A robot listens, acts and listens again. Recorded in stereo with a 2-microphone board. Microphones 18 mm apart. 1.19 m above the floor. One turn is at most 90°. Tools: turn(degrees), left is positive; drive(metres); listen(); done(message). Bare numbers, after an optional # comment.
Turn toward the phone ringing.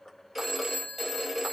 turn(-30)
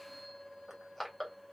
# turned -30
listen()
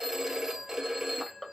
# So it is at 145° right.
turn(-90)
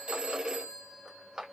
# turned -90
# The phone ringing is now 80° right.
turn(-80)
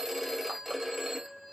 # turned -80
# The phone ringing is now 10° right.
turn(-10)
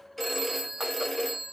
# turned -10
done("Facing the phone ringing, 1 to 2 m away.")